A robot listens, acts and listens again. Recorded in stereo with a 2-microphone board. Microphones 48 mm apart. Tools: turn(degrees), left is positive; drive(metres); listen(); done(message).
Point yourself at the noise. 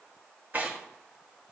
turn(degrees=-35)
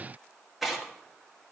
done("Facing the tearing paper, 1 to 2 m away.")